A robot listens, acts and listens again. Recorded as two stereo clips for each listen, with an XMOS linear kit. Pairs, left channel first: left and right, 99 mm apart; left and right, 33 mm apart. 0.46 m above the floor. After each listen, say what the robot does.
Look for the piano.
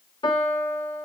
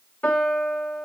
Turn 55° left.
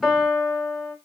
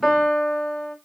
Found it: a piano, straight ahead, under 1 m away.